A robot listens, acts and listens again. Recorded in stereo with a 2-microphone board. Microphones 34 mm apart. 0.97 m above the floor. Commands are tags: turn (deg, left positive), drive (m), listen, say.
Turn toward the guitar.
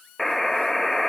<listen/>
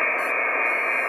<listen/>
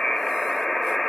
<say>I can't make out a guitar, only a buzzer.</say>